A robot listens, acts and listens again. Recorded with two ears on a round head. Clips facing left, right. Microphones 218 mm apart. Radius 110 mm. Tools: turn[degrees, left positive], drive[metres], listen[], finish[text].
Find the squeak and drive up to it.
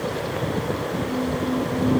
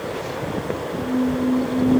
Thought: The squeak: about 40° right or 140° right.
Action: turn[-40]
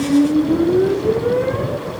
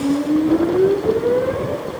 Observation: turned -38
Action: drive[1.0]
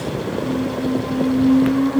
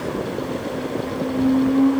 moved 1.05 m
Action: drive[1.0]
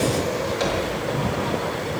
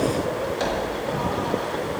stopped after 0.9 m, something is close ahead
Action: finish[I am next to the squeak.]